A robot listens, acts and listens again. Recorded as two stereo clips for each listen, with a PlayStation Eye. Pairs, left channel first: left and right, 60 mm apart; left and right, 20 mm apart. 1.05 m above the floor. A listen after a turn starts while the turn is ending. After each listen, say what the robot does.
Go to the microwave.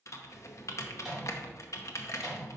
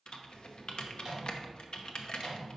Turn 30° right.
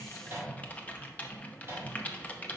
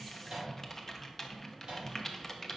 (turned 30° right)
Turn 145° right.
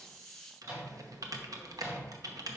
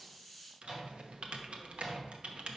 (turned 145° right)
Turn 20° right.
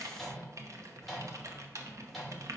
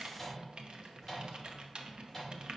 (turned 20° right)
Drive 1.0 m forward.
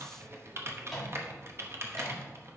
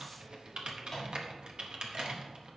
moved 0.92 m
Drive 1.0 m forward.
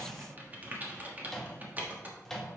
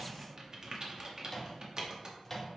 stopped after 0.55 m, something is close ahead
I am next to the microwave.